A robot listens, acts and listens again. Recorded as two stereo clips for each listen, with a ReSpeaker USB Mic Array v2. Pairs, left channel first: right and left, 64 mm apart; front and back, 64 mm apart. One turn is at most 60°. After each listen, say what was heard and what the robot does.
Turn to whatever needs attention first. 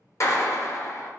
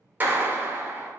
Keep listening.
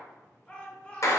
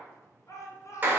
The shout: 20° right. Turn 20° right.
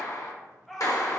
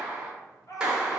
Facing the shout, 1 to 2 m away.